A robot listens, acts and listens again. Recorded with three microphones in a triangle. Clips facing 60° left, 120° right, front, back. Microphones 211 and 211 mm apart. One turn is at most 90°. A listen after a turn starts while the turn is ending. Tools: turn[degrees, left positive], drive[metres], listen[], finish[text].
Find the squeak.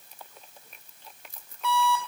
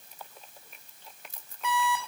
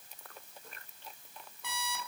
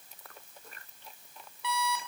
Action: listen[]
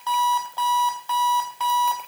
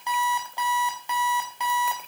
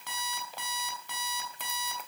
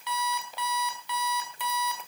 Action: listen[]
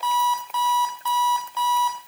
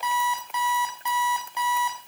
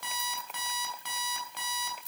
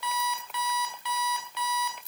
Action: finish[I can't make out a squeak to turn to.]